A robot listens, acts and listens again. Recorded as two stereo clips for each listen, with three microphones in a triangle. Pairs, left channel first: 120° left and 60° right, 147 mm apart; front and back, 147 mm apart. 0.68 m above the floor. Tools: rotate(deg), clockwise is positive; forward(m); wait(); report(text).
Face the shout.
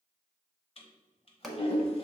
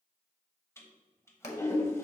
wait()
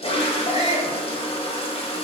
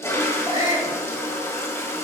rotate(-150)
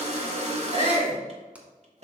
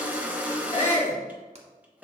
rotate(20)
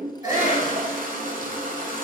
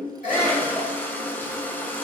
report("Found it: a shout, straight ahead, 2 to 4 m away.")